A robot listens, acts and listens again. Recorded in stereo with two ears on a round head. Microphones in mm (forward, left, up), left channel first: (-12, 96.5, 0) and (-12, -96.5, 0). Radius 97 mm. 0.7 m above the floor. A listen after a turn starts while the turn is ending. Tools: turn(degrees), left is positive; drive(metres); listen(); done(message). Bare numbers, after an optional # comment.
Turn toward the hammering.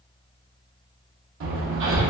# The hammering: about 65° right or 115° right.
turn(-65)
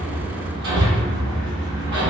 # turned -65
# So it is at 50° right.
turn(-50)
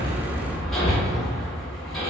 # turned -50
done("Found it: hammering, straight ahead.")